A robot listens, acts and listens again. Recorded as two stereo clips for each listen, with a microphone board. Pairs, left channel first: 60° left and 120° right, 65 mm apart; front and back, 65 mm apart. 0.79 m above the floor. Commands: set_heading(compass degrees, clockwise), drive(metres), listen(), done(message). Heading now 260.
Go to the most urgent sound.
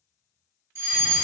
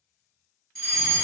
set_heading(340)
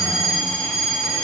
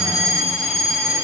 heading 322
set_heading(337)
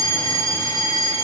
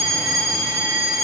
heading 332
drive(1.0)
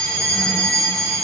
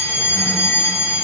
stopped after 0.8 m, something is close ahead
set_heading(342)
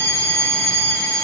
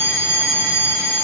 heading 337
done("I am next to the fire alarm.")